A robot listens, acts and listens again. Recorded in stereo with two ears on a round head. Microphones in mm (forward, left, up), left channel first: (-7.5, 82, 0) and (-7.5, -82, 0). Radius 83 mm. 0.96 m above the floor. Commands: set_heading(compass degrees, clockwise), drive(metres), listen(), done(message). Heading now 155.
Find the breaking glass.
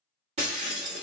set_heading(190)
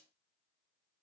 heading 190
listen()
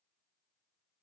done("I heard breaking glass, but can't make it out now. It was about straight ahead or 110° right.")